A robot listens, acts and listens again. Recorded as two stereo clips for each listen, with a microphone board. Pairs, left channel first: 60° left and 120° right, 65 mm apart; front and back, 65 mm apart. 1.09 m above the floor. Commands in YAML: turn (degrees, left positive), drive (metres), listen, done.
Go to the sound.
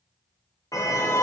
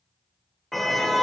turn: 85
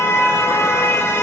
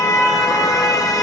turn: 10
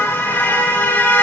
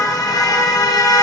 drive: 1.0
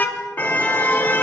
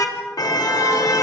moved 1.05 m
drive: 1.0
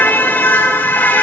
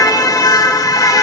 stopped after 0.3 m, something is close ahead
done: "I am next to the car horn."